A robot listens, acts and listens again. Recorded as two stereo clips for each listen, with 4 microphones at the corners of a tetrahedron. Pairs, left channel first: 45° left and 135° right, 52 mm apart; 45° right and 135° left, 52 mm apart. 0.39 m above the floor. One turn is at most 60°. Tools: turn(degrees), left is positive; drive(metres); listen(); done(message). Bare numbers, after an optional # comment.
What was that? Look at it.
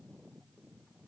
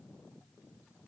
listen()
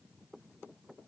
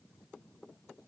listen()
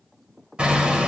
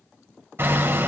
# The hammering: 160° left.
turn(60)
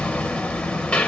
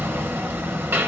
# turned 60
# The hammering is now 110° left.
turn(60)
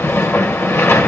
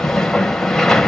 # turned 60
# The hammering is now 30° left.
turn(30)
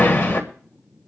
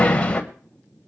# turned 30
# The hammering is now 15° left.
turn(15)
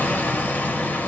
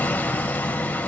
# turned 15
done("Found it: hammering, straight ahead.")